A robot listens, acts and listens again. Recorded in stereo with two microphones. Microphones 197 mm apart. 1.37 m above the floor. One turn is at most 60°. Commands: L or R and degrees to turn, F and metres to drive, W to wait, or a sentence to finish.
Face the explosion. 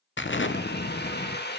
L60
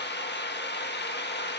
W
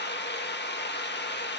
I heard an explosion, but can't make it out now. It was about 15° left or 45° left.